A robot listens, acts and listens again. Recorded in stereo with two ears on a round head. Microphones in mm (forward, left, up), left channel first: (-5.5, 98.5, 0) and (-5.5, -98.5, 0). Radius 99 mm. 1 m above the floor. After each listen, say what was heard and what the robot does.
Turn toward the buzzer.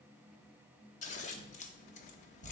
Keep listening.
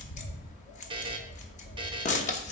The buzzer: about 20° right or 160° right. Turn 20° right.
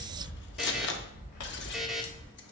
Found it: a buzzer, straight ahead.